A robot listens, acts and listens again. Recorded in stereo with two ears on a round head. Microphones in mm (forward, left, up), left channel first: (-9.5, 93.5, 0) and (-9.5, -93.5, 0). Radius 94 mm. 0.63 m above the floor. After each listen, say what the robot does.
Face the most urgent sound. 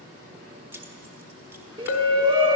Turn 25° right.
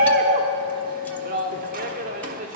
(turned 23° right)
Turn 130° right.
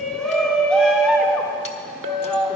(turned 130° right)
Found it: a shout, straight ahead.